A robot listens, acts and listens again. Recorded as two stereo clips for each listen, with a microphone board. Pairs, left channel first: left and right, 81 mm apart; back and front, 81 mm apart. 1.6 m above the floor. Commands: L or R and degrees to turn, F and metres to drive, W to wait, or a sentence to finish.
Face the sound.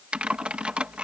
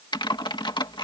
R165
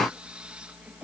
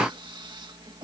R15
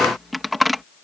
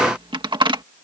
Found it: typing on a keyboard, straight ahead.